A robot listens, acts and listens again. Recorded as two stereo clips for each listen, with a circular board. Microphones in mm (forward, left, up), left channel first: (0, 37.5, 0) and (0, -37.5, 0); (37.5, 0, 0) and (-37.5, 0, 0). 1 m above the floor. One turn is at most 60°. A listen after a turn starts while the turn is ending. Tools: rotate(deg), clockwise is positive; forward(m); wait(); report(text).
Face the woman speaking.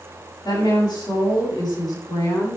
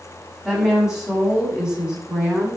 rotate(-60)
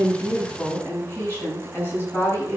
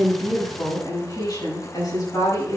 rotate(-35)
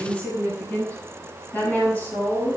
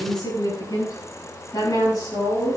rotate(-25)
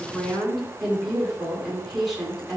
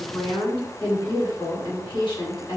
report("Found it: a woman speaking, straight ahead.")